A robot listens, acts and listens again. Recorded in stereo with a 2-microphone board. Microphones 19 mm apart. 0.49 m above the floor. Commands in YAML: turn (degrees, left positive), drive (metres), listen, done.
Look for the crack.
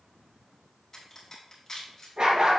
turn: 15
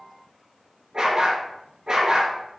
listen: true
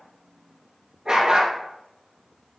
done: "I heard a crack, but can't make it out now. It was about straight ahead or 150° left."